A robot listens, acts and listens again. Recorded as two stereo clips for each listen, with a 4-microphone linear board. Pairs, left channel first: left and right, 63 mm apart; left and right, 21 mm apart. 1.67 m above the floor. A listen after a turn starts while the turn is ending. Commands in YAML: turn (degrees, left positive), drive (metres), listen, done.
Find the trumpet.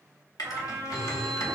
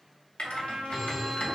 turn: -55
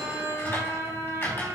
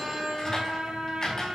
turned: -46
turn: -70
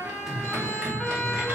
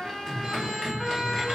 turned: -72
done: "Facing the trumpet."